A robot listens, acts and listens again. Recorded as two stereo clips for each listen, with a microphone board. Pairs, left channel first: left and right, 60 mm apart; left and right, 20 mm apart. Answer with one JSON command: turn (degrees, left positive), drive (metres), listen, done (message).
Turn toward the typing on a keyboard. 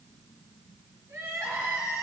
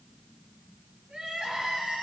{"listen": true}
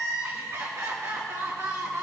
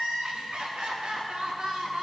{"listen": true}
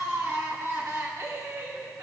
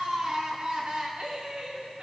{"done": "I can't make out typing on a keyboard to turn to."}